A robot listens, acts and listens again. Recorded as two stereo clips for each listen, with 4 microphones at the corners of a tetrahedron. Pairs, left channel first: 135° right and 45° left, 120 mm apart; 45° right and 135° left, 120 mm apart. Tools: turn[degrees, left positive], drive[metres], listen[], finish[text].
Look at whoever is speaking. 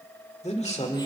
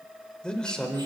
Thought: The man speaking: 125° right.
Action: turn[-125]
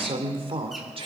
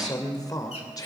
Thought: The man speaking is now 10° left.
Action: turn[10]
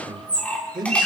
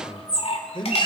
Action: finish[Found it: a man speaking, straight ahead, 2 to 4 m away.]